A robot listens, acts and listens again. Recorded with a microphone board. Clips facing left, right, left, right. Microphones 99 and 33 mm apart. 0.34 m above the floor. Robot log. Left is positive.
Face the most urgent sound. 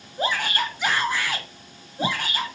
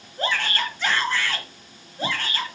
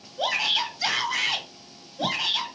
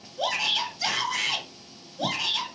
cmd yaw +30
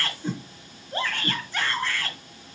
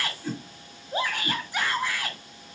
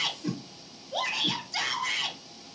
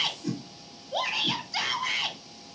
note: So it is at 15° right.
cmd yaw -15
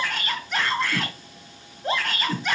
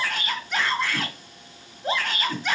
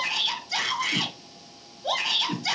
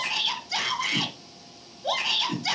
end: Found it: a shout, straight ahead.